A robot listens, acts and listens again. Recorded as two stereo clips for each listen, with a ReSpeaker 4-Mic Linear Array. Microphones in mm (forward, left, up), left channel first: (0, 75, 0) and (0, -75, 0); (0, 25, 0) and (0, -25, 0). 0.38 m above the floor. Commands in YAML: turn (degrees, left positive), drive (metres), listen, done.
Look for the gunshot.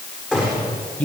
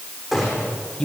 turn: -30
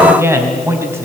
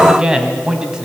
listen: true
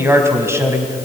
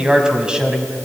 done: "I heard a gunshot, but can't make it out now. It was about 25° left or 145° right."